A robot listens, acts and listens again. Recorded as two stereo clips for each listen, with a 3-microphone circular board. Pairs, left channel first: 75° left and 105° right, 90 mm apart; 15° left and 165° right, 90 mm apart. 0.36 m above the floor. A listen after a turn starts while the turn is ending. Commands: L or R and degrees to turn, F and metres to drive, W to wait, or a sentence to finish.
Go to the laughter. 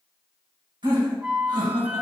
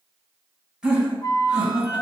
R85
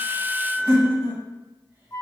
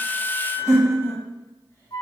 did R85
R40
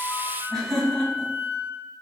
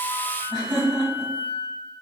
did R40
R10
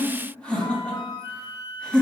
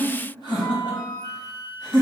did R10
F1.0
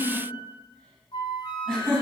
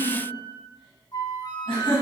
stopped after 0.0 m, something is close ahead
Something is in my way. I am facing the laughter but have not reached it.